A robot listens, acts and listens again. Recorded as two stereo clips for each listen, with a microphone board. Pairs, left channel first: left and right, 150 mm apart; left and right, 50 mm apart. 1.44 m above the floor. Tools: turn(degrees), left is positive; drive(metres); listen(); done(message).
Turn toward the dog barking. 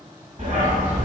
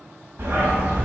turn(degrees=-55)
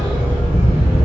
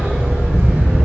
turn(degrees=-40)
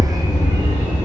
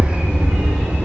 turn(degrees=-35)
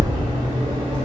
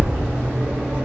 turn(degrees=-35)
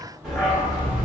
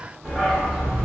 turn(degrees=-10)
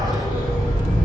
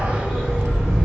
done("Facing the dog barking.")